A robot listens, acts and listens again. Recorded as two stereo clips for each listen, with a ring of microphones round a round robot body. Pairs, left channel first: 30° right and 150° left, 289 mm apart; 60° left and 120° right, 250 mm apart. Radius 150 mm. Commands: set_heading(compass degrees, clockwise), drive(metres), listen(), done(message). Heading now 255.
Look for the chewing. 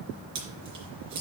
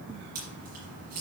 set_heading(75)
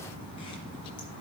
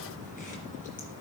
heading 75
listen()
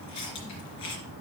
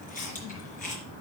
listen()
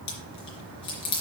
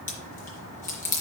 done("Facing the chewing.")